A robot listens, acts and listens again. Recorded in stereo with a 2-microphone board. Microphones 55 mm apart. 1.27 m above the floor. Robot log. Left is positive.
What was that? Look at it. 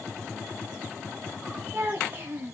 note: The child speaking: about 40° right or 140° right.
cmd yaw -40
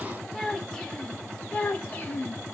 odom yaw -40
note: So it is at 35° left.
cmd yaw +35
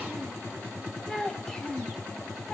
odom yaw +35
note: The child speaking is now 10° left.
cmd yaw +10
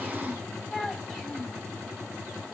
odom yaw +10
end: Facing the child speaking, 1 to 2 m away.